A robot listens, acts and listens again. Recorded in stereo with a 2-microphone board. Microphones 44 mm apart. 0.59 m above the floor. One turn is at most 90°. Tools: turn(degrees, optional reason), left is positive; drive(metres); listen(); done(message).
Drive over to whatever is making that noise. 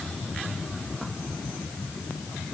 listen()
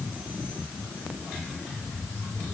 listen()
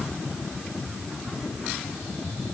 done("I can't make out anything to turn to.")